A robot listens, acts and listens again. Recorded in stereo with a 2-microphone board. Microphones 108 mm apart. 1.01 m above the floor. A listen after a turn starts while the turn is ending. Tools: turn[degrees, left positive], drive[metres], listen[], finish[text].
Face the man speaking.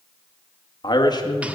Thought: The man speaking: about 35° left or 145° left.
Action: turn[35]
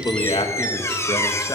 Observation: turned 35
Thought: The man speaking: about 35° left or 145° left.
Action: turn[35]
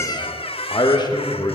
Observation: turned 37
Thought: The man speaking: about 35° left or 145° left.
Action: turn[35]
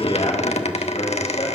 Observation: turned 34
Thought: So it is at 130° left.
Action: turn[130]
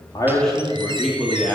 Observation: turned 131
Action: finish[Found it: a man speaking, straight ahead.]